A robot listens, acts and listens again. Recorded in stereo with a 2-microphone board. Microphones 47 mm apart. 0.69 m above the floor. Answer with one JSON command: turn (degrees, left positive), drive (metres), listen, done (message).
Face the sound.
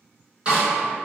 {"turn": -30}
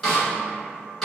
{"done": "Facing the snare drum, 2 to 4 m away."}